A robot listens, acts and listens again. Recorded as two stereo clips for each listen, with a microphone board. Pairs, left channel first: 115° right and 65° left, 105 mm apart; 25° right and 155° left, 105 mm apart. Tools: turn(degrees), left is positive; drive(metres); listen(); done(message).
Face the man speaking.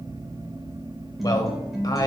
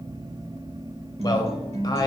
turn(degrees=-65)
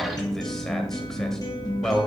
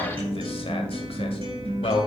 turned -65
turn(degrees=-25)
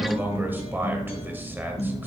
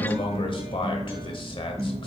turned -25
done("Found it: a man speaking, straight ahead, 1 to 2 m away.")